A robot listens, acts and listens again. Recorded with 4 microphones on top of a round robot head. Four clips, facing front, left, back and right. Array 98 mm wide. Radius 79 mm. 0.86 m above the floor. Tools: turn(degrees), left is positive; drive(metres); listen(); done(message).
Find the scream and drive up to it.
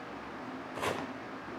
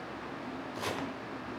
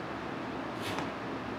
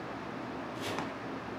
listen()
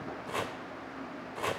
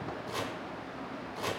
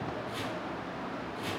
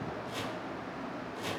listen()
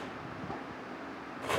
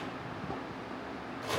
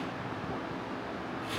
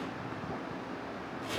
done("I can't make out a scream to turn to.")